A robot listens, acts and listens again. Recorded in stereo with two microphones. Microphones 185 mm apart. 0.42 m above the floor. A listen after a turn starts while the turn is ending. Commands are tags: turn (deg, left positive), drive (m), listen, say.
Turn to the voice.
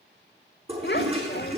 <turn deg="65"/>
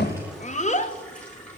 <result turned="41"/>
<turn deg="45"/>
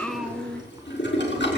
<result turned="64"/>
<turn deg="-20"/>
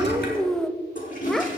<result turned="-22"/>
<say>Found it: a child speaking, straight ahead.</say>